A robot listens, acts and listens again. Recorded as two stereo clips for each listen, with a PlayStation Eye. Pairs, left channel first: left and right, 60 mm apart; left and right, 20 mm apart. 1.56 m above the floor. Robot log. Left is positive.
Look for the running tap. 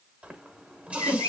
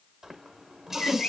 note: The running tap: about 25° right or 155° right.
cmd yaw -25
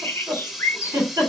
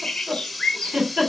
note: So it is at 10° right.
cmd yaw -10
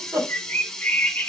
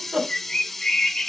end: Found it: a running tap, straight ahead.